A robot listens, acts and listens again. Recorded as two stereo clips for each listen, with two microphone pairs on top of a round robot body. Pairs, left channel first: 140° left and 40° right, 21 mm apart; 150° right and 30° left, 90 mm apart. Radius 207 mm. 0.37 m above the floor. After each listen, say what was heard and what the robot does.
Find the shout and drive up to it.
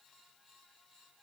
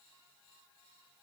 Keep listening.
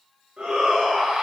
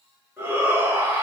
The shout: 35° right. Turn 35° right.
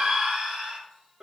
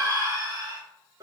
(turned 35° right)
The shout is now 10° right. Turn 10° right.
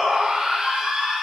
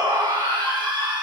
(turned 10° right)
Drive 1.0 m forward.
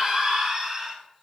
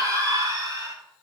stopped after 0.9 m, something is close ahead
I am next to the shout.